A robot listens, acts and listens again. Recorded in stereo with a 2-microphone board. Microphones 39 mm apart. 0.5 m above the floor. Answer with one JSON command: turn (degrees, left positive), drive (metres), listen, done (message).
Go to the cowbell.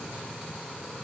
{"listen": true}
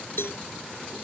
{"turn": 90}
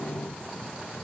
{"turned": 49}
{"turn": 40}
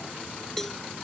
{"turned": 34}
{"turn": 10}
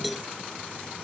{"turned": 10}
{"drive": 1.0}
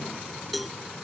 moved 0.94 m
{"drive": 1.0}
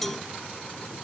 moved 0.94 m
{"turn": 10}
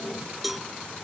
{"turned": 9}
{"drive": 1.0}
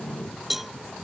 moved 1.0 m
{"drive": 1.0}
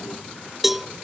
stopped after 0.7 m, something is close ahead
{"done": "I am next to the cowbell."}